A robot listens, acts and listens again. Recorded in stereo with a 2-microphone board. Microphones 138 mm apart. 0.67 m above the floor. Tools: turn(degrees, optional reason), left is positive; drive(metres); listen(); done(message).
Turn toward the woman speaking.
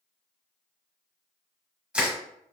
listen()
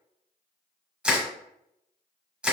listen()
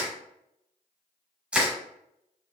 done("I can't make out a woman speaking, only crushing.")